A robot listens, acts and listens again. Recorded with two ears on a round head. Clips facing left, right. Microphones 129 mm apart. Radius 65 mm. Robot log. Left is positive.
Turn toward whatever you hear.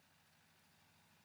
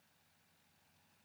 cmd idle
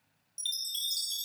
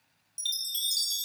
cmd yaw -30
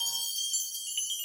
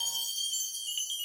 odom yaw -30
note: So it is at 20° left.
cmd yaw +20
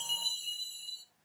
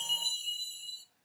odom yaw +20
end: Found it: a chime, straight ahead.